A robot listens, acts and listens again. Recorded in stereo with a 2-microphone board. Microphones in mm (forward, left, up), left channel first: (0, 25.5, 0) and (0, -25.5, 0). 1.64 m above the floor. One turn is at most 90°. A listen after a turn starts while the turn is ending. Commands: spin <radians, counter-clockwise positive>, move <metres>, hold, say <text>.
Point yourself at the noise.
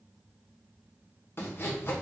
spin 0.79
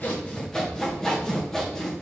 spin 0.17
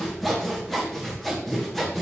say Facing the sawing.